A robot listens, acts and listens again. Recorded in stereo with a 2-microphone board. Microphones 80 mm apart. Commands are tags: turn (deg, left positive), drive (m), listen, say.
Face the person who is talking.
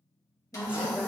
<turn deg="-15"/>
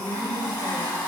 <say>Found it: a woman speaking, straight ahead.</say>